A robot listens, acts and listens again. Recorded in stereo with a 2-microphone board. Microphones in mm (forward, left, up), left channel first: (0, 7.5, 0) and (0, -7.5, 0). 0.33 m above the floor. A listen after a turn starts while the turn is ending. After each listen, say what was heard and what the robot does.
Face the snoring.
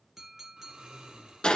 The snoring: about 65° right or 115° right. Turn 65° right.
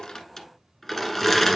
Keep listening.
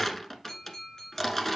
Keep listening.
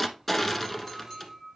I heard snoring, but can't make it out now. It was about straight ahead or 50° right.